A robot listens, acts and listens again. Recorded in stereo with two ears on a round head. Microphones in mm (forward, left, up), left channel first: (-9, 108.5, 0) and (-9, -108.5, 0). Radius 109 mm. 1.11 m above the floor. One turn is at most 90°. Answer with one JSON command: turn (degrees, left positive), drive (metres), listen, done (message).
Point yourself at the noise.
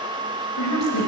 {"turn": 90}
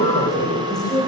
{"turn": 15}
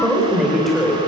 {"done": "Facing the woman speaking."}